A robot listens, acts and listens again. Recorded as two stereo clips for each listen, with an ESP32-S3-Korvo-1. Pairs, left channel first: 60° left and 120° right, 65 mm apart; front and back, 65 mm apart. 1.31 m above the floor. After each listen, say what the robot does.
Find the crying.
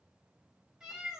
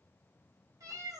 Keep listening.
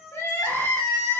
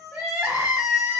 Turn 110° left.
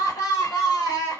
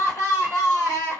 Turn 40° left.
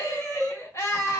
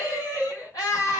Turn 15° left.
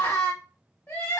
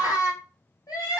Facing the crying, 1 to 2 m away.